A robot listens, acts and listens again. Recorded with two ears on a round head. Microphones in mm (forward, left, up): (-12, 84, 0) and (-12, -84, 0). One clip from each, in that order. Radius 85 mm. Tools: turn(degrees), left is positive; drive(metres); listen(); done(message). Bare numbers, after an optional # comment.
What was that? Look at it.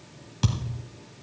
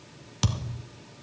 # The thud: about 35° right or 145° right.
turn(-35)
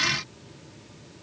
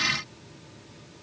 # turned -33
listen()
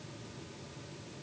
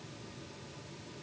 done("I heard a thud, but can't make it out now. It was about straight ahead or 115° right.")